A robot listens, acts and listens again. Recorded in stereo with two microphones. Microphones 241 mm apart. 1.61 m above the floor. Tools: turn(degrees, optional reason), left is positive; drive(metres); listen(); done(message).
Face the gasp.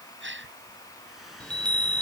turn(degrees=-50, reason="The gasp: about 50° right or 130° right.")
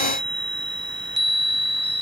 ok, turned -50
listen()
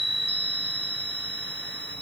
done("I heard a gasp, but can't make it out now. It was about straight ahead or 80° right.")